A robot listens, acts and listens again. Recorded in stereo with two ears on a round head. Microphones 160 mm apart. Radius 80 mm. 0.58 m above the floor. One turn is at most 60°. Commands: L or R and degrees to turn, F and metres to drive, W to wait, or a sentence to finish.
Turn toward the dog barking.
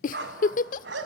R60
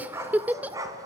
R20
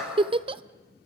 Facing the dog barking, 2 to 4 m away.